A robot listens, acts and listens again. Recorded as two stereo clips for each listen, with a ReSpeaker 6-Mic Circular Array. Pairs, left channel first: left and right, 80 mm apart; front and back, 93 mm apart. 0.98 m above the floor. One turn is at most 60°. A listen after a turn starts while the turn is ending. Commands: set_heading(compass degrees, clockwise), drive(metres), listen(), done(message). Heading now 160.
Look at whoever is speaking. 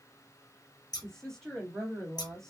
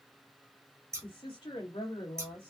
done("Facing the woman speaking.")